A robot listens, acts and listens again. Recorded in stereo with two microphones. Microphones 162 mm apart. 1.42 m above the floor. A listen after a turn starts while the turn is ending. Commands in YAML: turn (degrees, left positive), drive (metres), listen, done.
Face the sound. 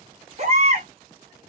turn: -45
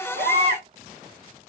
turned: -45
turn: -90
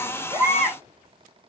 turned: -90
done: "Facing the baby crying, 1 to 2 m away."